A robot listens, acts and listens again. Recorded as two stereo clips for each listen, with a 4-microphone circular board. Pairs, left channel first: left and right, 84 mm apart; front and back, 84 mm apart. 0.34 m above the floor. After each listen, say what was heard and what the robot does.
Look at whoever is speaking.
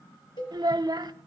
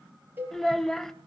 The child speaking: 85° right. Turn 85° right.
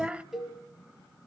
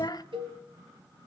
The child speaking is now 15° right. Turn 15° right.
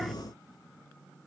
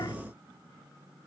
Keep listening.
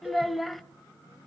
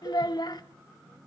Facing the child speaking.